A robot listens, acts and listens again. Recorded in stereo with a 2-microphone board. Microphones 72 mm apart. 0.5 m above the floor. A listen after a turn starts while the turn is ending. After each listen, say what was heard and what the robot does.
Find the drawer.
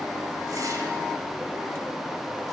Keep listening.
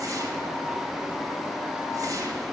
Keep listening.
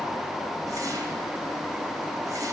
I can't make out a drawer.